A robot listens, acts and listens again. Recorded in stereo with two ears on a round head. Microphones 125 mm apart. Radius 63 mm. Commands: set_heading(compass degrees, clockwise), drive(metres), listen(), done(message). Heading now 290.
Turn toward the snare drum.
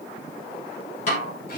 set_heading(230)
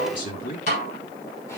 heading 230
set_heading(175)
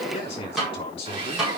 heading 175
done("Found it: a snare drum, straight ahead, over 4 m away.")